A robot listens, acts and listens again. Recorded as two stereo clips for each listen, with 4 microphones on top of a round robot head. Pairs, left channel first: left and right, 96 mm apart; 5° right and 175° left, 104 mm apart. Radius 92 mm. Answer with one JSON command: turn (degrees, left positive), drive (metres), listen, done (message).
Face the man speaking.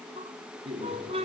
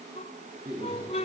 {"turn": -120}
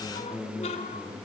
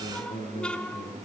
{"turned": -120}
{"turn": 10}
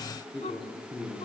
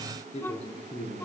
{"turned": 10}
{"done": "Found it: a man speaking, straight ahead."}